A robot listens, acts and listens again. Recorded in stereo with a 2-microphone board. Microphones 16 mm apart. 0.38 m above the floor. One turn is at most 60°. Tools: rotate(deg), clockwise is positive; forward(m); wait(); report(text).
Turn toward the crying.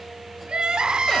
rotate(60)
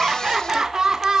rotate(60)
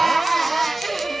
report("Found it: crying, straight ahead, 2 to 4 m away.")